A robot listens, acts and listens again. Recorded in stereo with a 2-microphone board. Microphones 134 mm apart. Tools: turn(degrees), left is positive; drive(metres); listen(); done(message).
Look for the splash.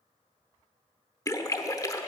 turn(degrees=25)
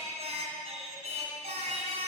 listen()
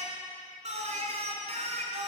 done("I heard a splash, but can't make it out now. It was about straight ahead or 130° left.")